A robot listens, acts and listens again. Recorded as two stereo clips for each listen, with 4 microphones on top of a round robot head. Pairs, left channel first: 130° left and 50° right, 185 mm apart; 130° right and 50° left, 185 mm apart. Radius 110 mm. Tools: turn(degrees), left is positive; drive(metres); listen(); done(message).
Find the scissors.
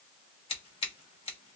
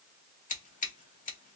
turn(degrees=-170)
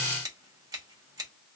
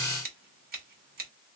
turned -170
turn(degrees=20)
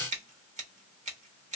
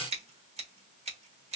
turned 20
done("Found it: scissors, straight ahead, 1 to 2 m away.")